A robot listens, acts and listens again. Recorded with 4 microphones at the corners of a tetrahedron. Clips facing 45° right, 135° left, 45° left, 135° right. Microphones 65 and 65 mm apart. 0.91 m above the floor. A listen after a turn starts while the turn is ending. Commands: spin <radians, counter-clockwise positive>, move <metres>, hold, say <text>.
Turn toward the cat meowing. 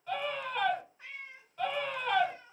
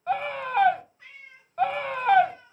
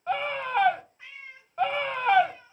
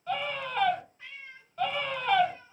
spin -0.79
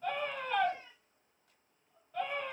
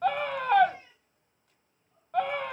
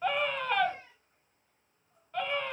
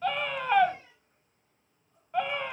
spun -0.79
hold
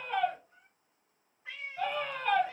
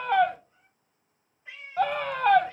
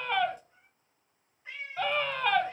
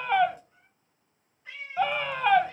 spin -0.61
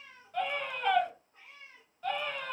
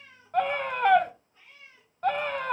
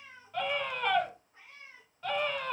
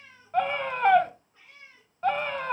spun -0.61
spin -0.26
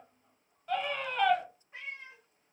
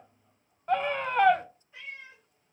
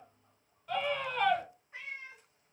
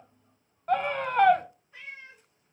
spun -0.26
say Facing the cat meowing, 2 to 4 m away.